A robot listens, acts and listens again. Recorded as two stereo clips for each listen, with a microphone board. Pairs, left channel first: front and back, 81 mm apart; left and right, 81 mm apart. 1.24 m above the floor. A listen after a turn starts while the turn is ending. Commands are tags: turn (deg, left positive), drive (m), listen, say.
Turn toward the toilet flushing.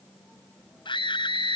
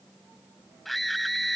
<listen/>
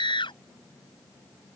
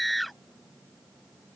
<listen/>
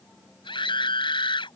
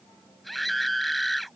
<say>I can't make out a toilet flushing, only a scream.</say>